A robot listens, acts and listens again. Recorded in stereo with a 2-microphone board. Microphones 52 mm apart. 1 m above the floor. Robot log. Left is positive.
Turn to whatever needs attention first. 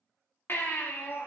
note: The baby crying: about 50° left or 130° left.
cmd yaw +50
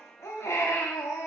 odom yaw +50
note: So it is at 80° left.
cmd yaw +80
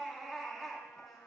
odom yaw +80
end: Facing the baby crying, 1 to 2 m away.